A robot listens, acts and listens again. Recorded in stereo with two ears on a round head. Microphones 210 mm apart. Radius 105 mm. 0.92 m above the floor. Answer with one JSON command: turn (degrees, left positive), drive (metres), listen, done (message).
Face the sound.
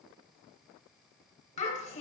{"turn": 30}
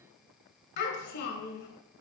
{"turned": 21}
{"turn": 130}
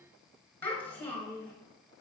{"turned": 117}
{"turn": 10}
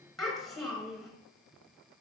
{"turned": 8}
{"done": "Found it: a child speaking, straight ahead, 2 to 4 m away."}